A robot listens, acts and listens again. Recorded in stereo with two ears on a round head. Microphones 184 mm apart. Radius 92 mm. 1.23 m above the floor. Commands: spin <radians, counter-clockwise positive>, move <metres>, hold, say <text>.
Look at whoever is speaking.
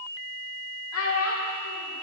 spin 1.57
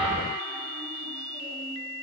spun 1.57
hold
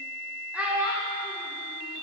say Found it: a child speaking, straight ahead, 2 to 4 m away.